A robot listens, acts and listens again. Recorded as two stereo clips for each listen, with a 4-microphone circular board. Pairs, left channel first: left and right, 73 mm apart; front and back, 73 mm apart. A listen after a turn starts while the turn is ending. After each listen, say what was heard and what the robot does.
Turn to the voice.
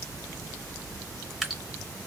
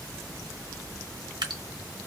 Keep listening.
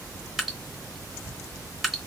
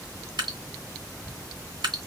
Keep listening.
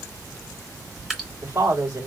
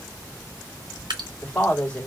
The woman speaking: 70° right. Turn 70° right.
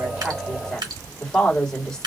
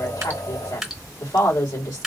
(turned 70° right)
The woman speaking is now 10° left. Turn 10° left.
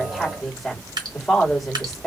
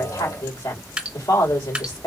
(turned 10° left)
Facing the woman speaking, 2 to 4 m away.